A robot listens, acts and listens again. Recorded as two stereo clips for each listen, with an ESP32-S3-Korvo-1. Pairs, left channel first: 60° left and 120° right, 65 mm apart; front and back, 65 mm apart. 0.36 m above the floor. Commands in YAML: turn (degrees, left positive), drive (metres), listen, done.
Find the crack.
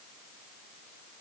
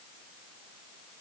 listen: true
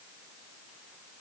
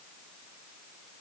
listen: true
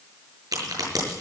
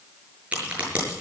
turn: -110
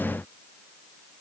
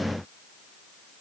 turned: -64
turn: -45
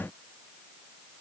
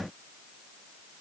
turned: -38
turn: -10
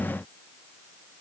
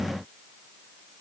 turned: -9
done: "Facing where the crack came from. I can't hear it now."